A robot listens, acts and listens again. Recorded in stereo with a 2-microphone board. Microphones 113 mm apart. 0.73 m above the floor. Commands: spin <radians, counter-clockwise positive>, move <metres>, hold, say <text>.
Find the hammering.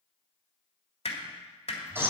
spin 1.22
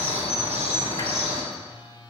hold
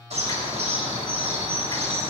hold
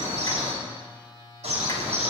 say I heard hammering, but can't make it out now. It was about straight ahead or 40° left.